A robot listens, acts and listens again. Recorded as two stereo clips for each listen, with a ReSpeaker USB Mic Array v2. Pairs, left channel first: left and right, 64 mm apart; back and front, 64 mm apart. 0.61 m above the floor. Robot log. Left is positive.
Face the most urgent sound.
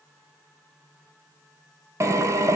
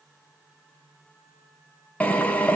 cmd idle
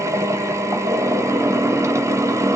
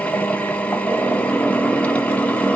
cmd idle
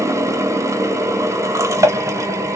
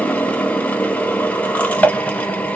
end: I can't make out anything urgent to turn to.